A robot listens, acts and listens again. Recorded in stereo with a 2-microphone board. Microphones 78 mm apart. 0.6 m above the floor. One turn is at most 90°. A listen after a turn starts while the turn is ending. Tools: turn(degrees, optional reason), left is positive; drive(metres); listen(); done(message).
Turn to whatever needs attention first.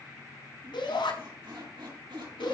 turn(degrees=90)
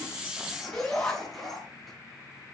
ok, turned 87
done("Found it: a shout, straight ahead, over 4 m away.")